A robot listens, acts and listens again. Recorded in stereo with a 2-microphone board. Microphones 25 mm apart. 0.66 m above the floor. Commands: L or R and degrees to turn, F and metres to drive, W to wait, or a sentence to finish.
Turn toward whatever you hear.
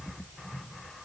W
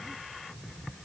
W
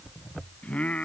L60
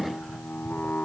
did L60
L60
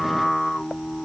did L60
Facing the singing.